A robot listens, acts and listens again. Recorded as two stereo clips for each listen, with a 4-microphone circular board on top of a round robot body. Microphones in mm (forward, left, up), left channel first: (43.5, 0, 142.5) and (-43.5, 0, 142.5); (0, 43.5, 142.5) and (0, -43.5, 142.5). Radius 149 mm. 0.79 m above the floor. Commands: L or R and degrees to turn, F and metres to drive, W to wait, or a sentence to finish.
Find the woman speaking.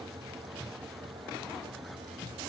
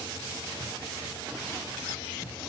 W
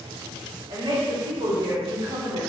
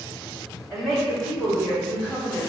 L170
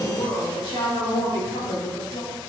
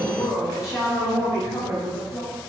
L30
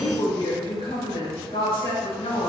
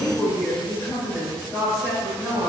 Facing the woman speaking.